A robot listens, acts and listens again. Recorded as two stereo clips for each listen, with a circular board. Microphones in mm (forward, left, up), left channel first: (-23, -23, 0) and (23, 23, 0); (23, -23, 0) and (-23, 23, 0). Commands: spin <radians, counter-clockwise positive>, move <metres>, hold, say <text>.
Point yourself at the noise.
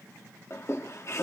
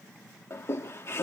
spin -1.66
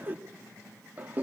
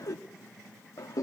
spin -0.26
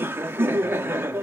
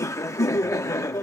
spin -0.17
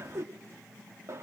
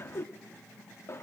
say Facing the laughter.